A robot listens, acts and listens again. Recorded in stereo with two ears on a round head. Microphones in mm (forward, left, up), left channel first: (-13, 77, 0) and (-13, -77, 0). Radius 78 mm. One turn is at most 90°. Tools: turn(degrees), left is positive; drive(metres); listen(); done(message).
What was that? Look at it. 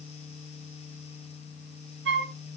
turn(degrees=-75)
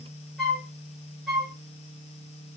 done("Found it: a flute, straight ahead.")